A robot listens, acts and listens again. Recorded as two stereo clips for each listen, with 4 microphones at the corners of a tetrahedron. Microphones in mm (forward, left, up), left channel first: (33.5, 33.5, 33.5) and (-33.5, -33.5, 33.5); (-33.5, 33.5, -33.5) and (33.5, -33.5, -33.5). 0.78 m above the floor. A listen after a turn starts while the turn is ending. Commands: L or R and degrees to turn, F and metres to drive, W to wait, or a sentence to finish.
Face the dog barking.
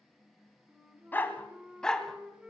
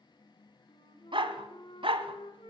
R40
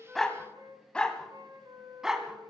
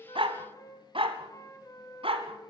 R50
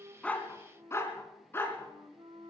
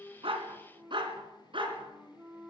R20
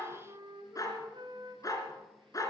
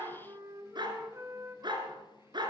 Found it: a dog barking, straight ahead.